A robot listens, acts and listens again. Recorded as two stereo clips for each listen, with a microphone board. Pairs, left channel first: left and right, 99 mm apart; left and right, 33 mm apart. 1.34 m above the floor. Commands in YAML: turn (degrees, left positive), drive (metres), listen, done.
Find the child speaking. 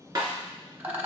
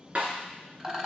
listen: true
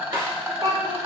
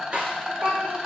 turn: -45
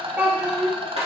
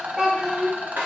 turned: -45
turn: -25
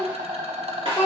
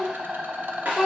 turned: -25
turn: -20
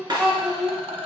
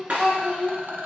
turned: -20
done: "Found it: a child speaking, straight ahead, 2 to 4 m away."